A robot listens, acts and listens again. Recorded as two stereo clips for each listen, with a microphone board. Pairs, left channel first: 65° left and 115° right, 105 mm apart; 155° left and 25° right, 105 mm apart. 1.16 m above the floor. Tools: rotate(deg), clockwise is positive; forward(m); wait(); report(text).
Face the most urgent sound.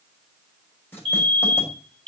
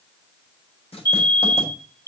rotate(80)
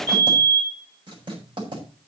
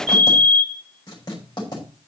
rotate(10)
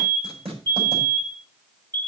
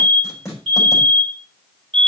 report("Facing the fire alarm, over 4 m away.")